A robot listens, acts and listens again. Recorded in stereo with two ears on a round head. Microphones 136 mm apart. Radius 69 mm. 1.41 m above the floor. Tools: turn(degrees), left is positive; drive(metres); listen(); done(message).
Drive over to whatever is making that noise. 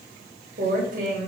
turn(degrees=-55)
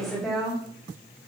drive(metres=1.0)
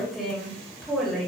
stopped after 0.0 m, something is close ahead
done("Something is in my way. I am facing the woman speaking but have not reached it.")